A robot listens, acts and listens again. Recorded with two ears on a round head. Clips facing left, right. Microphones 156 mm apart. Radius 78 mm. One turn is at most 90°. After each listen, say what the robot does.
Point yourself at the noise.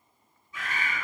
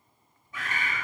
Turn 45° right.
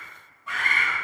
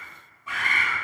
Facing the bird, under 1 m away.